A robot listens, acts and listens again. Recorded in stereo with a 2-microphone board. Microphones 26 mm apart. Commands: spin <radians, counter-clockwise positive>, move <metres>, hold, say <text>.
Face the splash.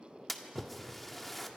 spin 0.52
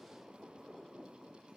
hold
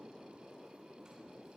say I heard a splash, but can't make it out now. It was about 25° right or 145° left.